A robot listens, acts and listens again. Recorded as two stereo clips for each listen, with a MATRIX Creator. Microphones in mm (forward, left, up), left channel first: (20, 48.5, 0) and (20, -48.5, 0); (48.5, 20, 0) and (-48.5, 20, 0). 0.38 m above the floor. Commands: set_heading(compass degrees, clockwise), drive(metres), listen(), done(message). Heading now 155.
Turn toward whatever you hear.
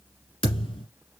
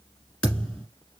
set_heading(75)
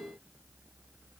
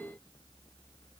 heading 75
done("Facing where the thud came from. I can't hear it now.")